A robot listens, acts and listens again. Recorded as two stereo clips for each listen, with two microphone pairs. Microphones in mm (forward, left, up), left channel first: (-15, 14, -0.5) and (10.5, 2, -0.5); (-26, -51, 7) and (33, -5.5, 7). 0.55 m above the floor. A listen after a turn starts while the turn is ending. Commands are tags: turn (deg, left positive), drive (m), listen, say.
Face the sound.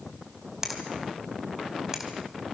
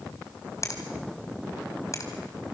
<turn deg="-100"/>
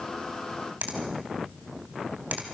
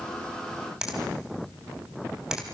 <turn deg="-45"/>
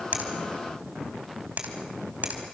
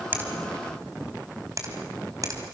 <say>Found it: a finger snap, straight ahead, 2 to 4 m away.</say>